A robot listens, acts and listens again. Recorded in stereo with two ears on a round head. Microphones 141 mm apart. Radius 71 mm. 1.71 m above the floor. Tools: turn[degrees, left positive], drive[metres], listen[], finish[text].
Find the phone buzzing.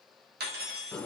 Action: listen[]
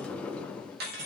Action: listen[]
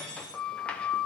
Action: finish[I can't make out a phone buzzing, only a sliding door and cutlery clinking.]